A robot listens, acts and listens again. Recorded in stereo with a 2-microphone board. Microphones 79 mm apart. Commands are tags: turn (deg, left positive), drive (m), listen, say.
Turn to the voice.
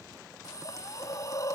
<listen/>
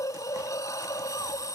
<listen/>
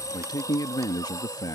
<turn deg="55"/>
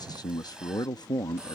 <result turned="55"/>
<turn deg="65"/>
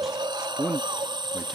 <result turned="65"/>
<say>Facing the man speaking.</say>